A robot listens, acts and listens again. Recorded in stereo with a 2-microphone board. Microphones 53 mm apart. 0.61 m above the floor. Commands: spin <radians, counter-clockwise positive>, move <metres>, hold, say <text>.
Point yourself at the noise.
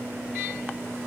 hold
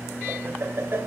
spin -0.87
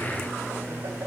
hold
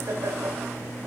spin -1.13
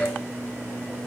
hold
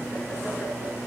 hold
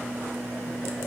say I heard laughter from this way, but can't make it out now.